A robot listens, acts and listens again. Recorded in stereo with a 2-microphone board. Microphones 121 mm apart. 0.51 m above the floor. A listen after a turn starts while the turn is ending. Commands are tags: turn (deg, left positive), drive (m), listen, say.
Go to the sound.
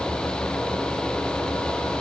<listen/>
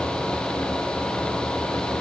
<listen/>
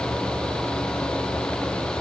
<say>I can't make out anything.</say>